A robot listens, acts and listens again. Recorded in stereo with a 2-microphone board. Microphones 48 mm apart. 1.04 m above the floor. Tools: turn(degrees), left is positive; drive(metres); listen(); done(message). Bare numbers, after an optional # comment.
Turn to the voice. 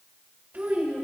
# The child speaking: about 40° right or 140° right.
turn(-40)
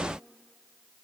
listen()
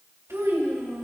# So it is at 95° right.
turn(-95)
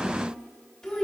# The child speaking is now 10° left.
turn(10)
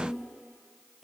done("Facing the child speaking, 2 to 4 m away.")